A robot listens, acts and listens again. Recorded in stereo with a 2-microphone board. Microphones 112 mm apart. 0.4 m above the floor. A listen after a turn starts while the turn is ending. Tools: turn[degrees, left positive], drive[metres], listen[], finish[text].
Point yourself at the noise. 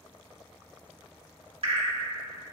Thought: The dripping: about 60° right or 120° right.
Action: turn[-60]
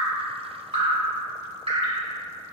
Thought: So it is at 60° right.
Action: turn[-60]
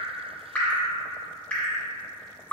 Thought: The dripping is now 15° left.
Action: turn[15]
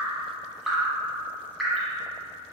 Action: finish[Facing the dripping.]